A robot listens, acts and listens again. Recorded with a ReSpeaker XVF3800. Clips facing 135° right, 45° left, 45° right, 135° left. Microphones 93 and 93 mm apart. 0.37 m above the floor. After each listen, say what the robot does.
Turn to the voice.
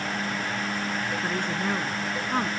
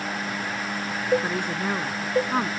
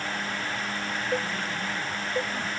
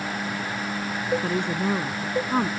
Turn 120° left.
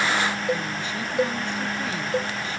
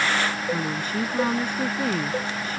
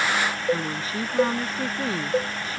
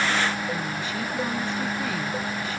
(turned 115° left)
Facing the woman speaking.